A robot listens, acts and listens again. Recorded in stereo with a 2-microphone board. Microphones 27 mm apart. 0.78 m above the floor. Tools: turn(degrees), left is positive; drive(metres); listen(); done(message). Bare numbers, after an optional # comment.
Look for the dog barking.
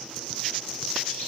listen()
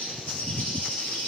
listen()
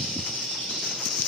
done("I can't make out a dog barking to turn to.")